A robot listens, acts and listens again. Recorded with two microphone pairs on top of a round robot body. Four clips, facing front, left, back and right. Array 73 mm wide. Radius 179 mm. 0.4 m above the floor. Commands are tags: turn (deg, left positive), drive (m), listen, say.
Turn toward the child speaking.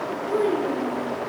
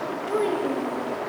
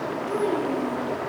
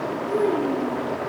<turn deg="80"/>
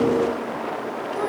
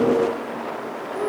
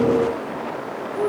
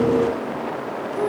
<listen/>
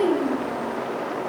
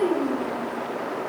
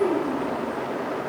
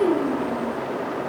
<say>Facing the child speaking, 2 to 4 m away.</say>